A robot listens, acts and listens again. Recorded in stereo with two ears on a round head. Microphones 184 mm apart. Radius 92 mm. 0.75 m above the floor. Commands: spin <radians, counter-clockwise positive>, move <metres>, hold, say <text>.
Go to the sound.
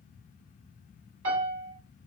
spin -1.57
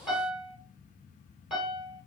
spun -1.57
move 1.0
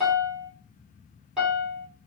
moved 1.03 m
move 1.0
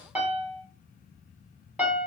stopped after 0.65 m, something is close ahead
spin -0.17
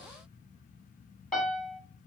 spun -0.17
say I am next to the piano.